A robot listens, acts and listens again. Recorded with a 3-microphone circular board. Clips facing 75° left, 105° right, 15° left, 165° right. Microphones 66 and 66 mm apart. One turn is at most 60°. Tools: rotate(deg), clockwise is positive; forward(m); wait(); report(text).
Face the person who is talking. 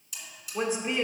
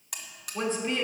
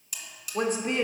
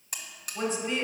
report("Found it: a woman speaking, straight ahead, 1 to 2 m away.")